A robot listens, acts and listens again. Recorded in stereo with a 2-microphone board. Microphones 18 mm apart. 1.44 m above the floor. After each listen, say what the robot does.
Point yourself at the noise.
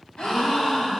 Turn 70° left.
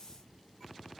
Keep listening.
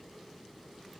I heard a gasp, but can't make it out now. It was about straight ahead or 40° left.